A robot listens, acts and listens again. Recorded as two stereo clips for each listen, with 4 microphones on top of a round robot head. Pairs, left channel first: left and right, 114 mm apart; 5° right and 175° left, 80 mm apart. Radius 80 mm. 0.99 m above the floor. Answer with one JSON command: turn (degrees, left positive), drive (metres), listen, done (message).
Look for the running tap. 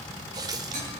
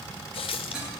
{"turn": -25}
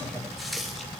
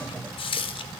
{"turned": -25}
{"done": "Found it: a running tap, straight ahead, under 1 m away."}